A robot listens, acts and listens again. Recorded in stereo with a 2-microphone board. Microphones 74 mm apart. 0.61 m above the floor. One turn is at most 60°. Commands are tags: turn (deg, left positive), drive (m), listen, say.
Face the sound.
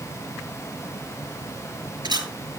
<turn deg="-60"/>
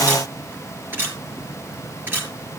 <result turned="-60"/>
<turn deg="-30"/>
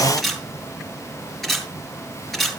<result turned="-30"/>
<say>Found it: a camera shutter, straight ahead.</say>